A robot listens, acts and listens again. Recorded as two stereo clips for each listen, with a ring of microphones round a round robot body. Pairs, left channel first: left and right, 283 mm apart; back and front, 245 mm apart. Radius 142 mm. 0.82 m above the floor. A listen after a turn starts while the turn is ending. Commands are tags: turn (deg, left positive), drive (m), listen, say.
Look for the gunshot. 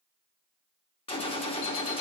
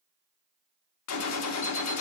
<turn deg="160"/>
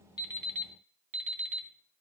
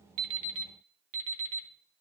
<say>I heard a gunshot from this way, but can't make it out now.</say>